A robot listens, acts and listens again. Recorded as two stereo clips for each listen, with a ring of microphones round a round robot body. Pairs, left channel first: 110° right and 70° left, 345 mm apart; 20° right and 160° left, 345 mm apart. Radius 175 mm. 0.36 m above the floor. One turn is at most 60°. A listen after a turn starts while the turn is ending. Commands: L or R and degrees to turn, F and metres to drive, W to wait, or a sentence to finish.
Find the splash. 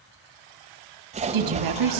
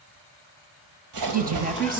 L60
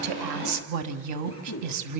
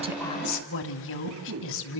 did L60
L60
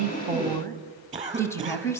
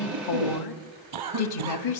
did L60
L15
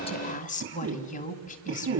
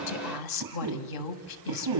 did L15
Facing where the splash came from. I can't hear it now.